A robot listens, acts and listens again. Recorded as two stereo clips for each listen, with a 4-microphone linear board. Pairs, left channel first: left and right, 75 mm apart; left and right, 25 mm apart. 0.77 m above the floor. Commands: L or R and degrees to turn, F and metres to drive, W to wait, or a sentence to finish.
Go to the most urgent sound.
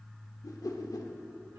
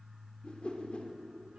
W
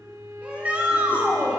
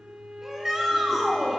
R20
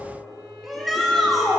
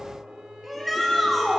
F1.0
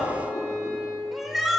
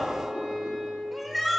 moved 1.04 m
F1.0
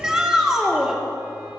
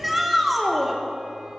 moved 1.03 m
R10
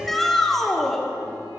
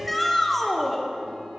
F1.0
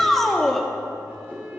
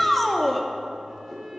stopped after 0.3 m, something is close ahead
Arrived at the shout, straight ahead.